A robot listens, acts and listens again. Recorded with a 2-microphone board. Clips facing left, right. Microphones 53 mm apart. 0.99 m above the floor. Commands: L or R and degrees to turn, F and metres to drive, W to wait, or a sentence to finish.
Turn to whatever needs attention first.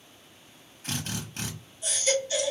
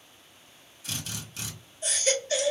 R50
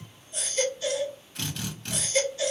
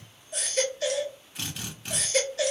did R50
R80
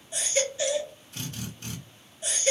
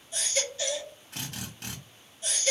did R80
L20
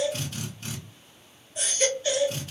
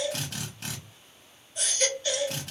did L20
Found it: a baby crying, straight ahead, 1 to 2 m away.